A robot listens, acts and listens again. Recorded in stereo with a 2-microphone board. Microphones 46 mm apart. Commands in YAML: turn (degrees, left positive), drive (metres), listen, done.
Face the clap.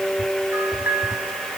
listen: true
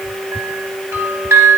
listen: true
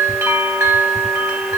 done: "I can't make out a clap to turn to."